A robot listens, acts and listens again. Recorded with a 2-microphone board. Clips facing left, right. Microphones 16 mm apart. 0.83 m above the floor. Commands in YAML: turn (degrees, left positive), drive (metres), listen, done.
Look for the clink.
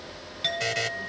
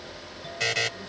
turn: 90
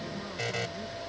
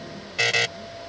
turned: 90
listen: true
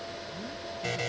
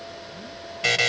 listen: true
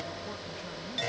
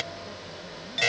turn: -10
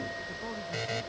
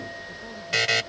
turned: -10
listen: true
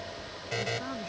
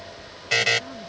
listen: true
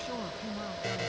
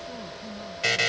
done: "Facing where the clink came from. I can't hear it now."